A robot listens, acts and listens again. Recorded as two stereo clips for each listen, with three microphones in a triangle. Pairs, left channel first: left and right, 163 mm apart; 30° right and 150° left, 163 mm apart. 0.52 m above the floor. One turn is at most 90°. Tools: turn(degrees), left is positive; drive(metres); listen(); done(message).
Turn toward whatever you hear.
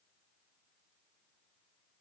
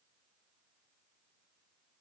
listen()
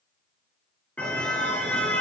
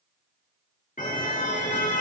done("Facing the car horn.")